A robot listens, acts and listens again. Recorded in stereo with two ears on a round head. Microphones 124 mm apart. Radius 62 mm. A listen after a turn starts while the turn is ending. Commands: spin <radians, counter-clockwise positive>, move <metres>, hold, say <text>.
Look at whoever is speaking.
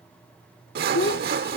spin 1.57
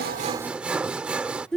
say Found it: a child speaking, straight ahead.